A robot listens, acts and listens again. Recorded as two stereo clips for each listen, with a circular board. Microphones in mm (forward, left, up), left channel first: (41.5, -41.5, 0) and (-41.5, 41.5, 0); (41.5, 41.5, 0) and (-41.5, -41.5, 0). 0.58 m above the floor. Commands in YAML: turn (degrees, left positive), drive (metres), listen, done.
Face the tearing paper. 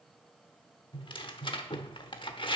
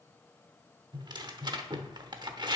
turn: -85
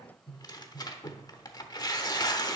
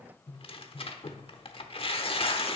turn: 10
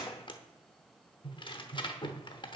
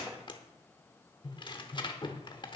done: "Found it: tearing paper, straight ahead, under 1 m away."